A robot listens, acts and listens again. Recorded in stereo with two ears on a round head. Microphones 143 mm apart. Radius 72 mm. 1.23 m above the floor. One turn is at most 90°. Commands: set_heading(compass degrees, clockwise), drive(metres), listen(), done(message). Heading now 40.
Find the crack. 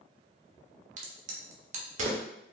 set_heading(90)
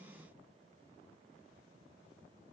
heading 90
listen()
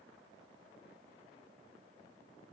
done("I heard a crack, but can't make it out now. It was about straight ahead or 80° right.")